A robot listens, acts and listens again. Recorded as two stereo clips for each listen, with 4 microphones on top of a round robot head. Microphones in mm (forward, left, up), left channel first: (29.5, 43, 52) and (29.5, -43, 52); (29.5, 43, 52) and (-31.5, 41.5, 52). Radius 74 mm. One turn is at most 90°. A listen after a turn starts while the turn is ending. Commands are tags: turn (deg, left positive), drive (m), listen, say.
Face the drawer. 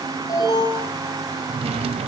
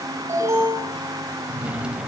<turn deg="-90"/>
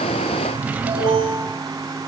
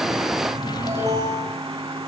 <turn deg="-20"/>
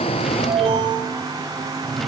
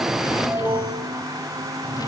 <say>Found it: a drawer, straight ahead.</say>